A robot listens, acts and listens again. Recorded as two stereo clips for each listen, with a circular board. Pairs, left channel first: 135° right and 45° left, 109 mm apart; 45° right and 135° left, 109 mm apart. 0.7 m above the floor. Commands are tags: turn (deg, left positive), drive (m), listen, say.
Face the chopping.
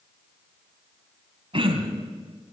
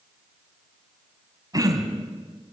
<listen/>
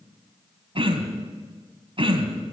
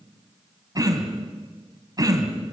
<listen/>
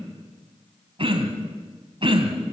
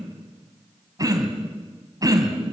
<say>I can't make out chopping, only throat clearing.</say>